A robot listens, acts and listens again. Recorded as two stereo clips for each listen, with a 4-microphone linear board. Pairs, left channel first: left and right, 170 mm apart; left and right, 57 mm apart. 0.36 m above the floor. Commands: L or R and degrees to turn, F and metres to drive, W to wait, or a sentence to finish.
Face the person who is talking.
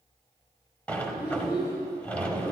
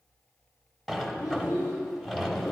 L90
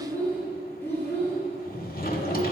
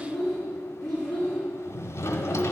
L10
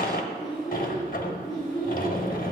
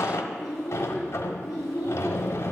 Found it: a child speaking, straight ahead, over 4 m away.